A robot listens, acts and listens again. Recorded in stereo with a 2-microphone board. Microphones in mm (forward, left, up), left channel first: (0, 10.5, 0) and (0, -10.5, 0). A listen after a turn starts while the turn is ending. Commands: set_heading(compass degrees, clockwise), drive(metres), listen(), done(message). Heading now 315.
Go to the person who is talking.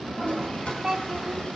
set_heading(345)
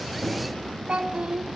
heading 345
set_heading(105)
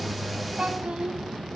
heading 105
set_heading(155)
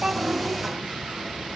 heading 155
listen()
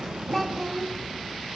drive(1.0)
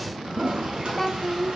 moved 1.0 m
set_heading(140)
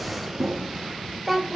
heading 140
drive(1.0)
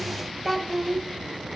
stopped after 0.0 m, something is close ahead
done("I am next to the child speaking.")